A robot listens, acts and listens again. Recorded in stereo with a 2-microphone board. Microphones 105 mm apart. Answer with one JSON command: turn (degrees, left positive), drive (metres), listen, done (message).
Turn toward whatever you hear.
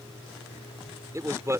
{"turn": -25}
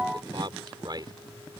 {"turn": -40}
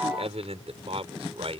{"turn": -115}
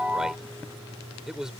{"done": "Facing the man speaking."}